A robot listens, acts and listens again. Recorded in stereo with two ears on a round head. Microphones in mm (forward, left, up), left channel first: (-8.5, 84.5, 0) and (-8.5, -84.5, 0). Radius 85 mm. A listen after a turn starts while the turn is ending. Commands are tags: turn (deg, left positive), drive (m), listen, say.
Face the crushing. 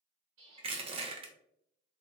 <turn deg="-30"/>
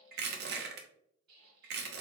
<turn deg="-115"/>
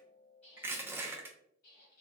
<turn deg="-10"/>
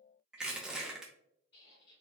<say>Facing the crushing.</say>